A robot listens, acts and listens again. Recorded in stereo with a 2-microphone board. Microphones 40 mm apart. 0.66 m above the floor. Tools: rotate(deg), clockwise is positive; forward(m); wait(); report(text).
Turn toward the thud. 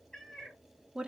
wait()
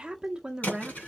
rotate(-40)
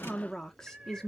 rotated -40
wait()
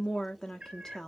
report("I heard a thud, but can't make it out now. It was about straight ahead or 100° left.")